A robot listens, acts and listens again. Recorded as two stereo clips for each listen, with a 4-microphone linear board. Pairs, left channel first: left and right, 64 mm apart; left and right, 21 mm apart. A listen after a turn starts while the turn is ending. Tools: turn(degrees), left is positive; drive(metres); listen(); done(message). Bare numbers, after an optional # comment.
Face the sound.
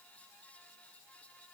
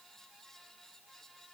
listen()
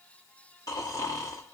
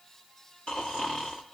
# The snoring: about 60° left or 120° left.
turn(60)
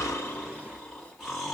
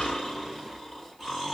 done("Facing the snoring.")